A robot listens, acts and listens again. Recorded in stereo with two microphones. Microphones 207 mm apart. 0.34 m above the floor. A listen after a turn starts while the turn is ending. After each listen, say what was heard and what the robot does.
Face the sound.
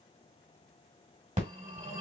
The phone ringing: about 35° right or 145° right. Turn 35° right.
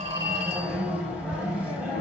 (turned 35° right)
Found it: a phone ringing, straight ahead.